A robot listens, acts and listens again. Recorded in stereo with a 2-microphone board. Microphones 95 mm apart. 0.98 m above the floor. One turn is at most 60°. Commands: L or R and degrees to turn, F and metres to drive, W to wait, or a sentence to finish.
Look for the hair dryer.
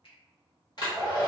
L50
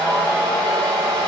L60
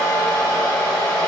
L45
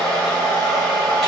Facing the hair dryer.